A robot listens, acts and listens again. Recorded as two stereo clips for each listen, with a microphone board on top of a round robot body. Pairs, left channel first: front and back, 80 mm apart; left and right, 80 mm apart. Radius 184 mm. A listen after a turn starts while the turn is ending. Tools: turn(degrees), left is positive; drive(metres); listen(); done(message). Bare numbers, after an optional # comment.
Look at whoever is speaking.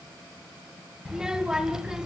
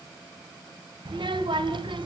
# The child speaking: 100° right.
turn(-100)
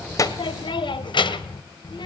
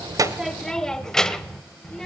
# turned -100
done("Facing the child speaking.")